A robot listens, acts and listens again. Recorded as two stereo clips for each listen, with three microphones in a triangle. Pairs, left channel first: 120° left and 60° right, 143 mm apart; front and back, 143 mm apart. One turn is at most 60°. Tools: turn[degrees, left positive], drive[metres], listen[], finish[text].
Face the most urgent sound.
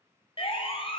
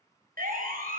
Thought: The siren: 170° left.
Action: turn[60]
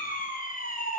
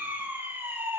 Thought: The siren is now 105° left.
Action: turn[60]
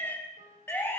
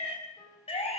Thought: The siren is now 45° left.
Action: turn[45]
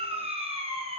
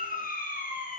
Thought: The siren is now 15° right.
Action: turn[-15]
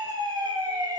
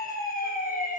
Action: finish[Found it: a siren, straight ahead, over 4 m away.]